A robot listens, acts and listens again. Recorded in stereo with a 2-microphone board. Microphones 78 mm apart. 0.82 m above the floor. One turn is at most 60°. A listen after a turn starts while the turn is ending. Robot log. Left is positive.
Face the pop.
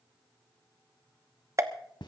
note: The pop: about 40° right or 140° right.
cmd yaw -40
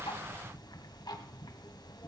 cmd idle
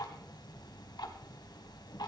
end: I heard a pop, but can't make it out now. It was about straight ahead or 100° right.